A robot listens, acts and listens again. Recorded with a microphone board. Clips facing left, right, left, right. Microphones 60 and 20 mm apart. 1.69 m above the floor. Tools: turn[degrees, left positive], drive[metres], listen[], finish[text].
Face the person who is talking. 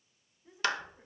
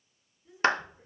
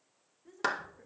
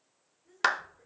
Thought: The woman speaking: about 25° left or 155° left.
Action: turn[25]
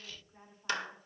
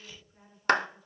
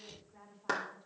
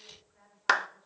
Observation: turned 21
Thought: So it is at 130° left.
Action: turn[130]
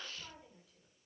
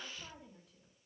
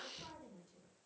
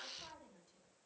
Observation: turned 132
Action: finish[Facing the woman speaking, over 4 m away.]